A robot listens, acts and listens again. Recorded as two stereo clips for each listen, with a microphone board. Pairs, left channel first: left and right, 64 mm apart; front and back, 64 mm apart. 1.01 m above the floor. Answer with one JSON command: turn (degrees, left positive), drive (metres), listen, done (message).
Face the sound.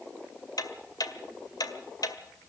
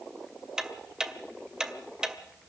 {"turn": 100}
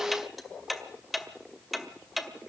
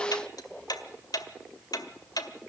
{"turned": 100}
{"done": "Facing the ticking."}